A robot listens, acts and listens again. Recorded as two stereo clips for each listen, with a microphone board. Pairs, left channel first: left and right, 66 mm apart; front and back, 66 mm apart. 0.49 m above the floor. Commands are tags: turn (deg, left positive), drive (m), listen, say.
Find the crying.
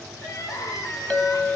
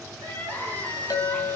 <turn deg="65"/>
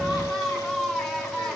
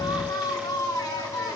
<say>Found it: crying, straight ahead.</say>